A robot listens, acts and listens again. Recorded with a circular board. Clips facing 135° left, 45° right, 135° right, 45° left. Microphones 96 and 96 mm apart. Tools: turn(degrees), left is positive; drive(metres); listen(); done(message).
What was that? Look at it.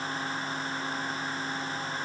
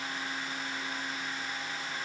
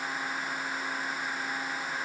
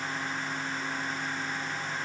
listen()
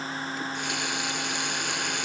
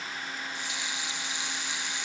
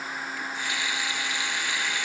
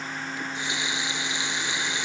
turn(degrees=110)
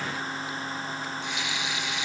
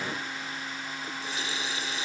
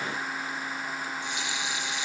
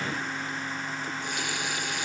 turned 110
turn(degrees=10)
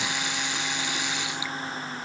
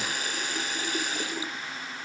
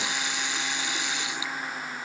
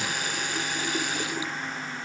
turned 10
done("Facing the running tap.")